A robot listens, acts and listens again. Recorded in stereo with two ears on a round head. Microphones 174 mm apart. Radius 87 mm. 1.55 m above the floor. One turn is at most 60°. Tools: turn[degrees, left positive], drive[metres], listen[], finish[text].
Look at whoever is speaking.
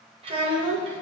Thought: The child speaking: about 30° right or 150° right.
Action: turn[-30]
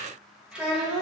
Action: finish[Facing the child speaking.]